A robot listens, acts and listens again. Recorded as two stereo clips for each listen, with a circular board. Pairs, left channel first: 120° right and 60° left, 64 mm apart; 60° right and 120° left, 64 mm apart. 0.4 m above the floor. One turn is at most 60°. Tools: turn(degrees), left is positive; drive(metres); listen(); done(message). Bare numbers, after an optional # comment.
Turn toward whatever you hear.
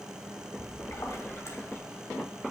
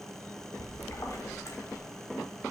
# The splash: 90° right.
turn(-60)
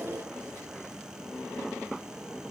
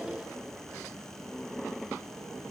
# Nothing new. It was at 30° right.
turn(-30)
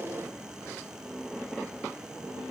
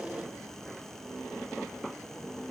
done("Facing where the splash came from. I can't hear it now.")